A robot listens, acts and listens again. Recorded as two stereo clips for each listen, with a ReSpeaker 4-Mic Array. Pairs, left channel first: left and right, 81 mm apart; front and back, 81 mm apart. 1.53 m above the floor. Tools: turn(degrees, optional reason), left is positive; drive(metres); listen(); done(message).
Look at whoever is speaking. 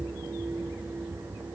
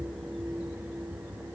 listen()
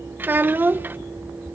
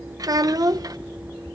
turn(degrees=-150, reason="The child speaking: 150° right.")
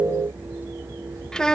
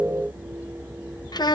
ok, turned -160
turn(degrees=10, reason="The child speaking is now 10° left.")
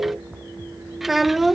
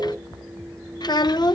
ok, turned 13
done("Found it: a child speaking, straight ahead.")